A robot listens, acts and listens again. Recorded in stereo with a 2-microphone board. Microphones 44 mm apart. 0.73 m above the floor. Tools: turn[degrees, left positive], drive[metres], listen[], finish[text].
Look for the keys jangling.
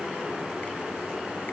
Action: listen[]
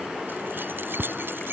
Thought: The keys jangling: about 60° right or 120° right.
Action: turn[-60]
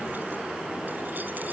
Action: listen[]
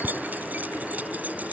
Thought: So it is at 40° right.
Action: turn[-40]
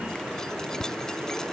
Thought: The keys jangling is now 15° left.
Action: turn[15]
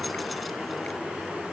Action: listen[]
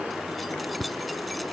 Action: finish[Facing the keys jangling.]